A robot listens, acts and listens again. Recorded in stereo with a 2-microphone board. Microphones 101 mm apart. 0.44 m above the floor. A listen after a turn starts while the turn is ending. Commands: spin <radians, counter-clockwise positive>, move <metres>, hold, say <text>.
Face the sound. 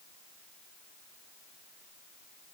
hold
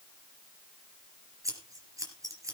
spin -0.61
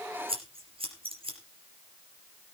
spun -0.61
spin -1.92
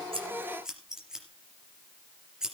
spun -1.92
say Facing the scissors.